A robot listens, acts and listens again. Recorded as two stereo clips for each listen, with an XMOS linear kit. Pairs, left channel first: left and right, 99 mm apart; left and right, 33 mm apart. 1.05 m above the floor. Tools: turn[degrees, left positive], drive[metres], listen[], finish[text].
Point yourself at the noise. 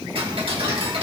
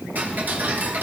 Thought: The ticking: about 65° right or 115° right.
Action: turn[-65]
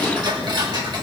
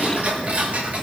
Thought: So it is at 45° right.
Action: turn[-45]
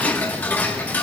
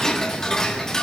Thought: The ticking is now 20° left.
Action: turn[20]
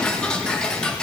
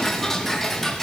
Thought: The ticking is now 10° left.
Action: turn[10]
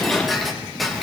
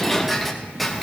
Action: finish[Facing the ticking.]